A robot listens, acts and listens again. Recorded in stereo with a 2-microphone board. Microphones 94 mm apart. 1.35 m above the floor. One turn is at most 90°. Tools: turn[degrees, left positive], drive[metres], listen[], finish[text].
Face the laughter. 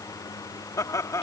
Thought: The laughter: about 35° left or 145° left.
Action: turn[35]
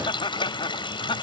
Thought: So it is at 120° left.
Action: turn[90]
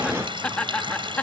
Thought: The laughter is now 15° left.
Action: turn[15]
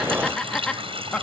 Thought: The laughter is now 10° left.
Action: turn[10]
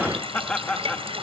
Thought: The laughter is now 10° left.
Action: turn[10]
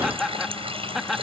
Action: finish[Facing the laughter.]